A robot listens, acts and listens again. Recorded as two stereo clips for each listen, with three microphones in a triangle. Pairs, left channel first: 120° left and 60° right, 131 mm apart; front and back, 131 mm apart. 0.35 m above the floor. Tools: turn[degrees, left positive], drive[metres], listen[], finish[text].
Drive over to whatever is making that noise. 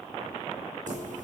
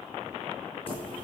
Thought: The keys jangling: 50° right.
Action: turn[-50]
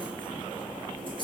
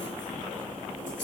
Thought: The keys jangling is now 10° right.
Action: turn[-10]
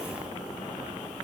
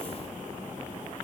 Action: listen[]
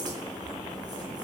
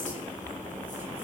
Action: drive[1.0]
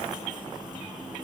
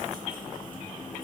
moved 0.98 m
Action: drive[1.0]
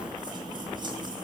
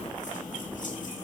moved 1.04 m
Action: drive[1.0]
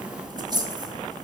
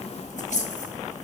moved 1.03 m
Action: drive[1.0]
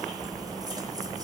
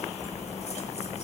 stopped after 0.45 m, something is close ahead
Action: finish[I am next to the keys jangling.]